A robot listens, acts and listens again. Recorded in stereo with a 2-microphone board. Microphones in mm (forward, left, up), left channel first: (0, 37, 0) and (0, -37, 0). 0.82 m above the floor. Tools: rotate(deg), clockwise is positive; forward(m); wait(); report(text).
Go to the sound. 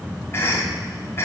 rotate(-35)
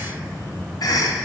rotate(-105)
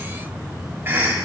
rotate(30)
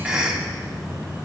rotate(10)
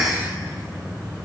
forward(1.0)
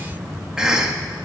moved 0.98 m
rotate(10)
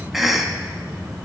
forward(1.0)
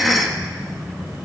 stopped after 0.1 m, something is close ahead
report("I am next to the cough.")